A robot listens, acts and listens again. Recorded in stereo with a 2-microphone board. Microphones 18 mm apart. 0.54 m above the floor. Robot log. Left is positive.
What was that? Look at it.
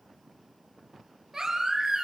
note: The baby crying: about 30° right or 150° right.
cmd yaw -30
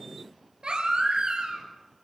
note: So it is at 120° right.
cmd yaw -120
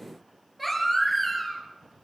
end: Found it: a baby crying, straight ahead, over 4 m away.